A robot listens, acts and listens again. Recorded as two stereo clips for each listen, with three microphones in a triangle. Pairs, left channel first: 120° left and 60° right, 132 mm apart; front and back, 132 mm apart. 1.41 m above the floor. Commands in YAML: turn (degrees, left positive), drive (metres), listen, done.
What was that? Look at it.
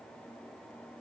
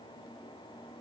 listen: true
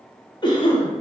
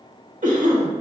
turn: 170
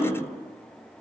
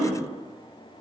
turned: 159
turn: 15
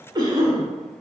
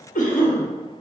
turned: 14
done: "Facing the cough."